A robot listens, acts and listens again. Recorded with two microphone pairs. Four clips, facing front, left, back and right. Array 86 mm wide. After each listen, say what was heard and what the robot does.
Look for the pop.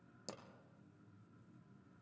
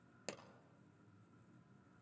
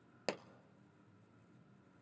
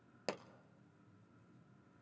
The pop: 160° right. Turn 160° right.
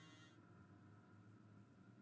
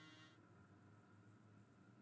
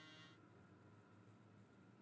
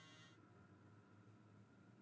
I heard a pop from this way, but can't make it out now.